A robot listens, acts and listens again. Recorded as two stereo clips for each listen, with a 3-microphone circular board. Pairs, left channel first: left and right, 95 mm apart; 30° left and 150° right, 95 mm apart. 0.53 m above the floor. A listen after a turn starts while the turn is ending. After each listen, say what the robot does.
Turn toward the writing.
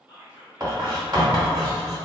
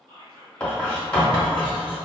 Turn 50° right.
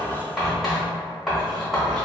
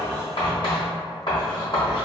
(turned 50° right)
Facing the writing, 1 to 2 m away.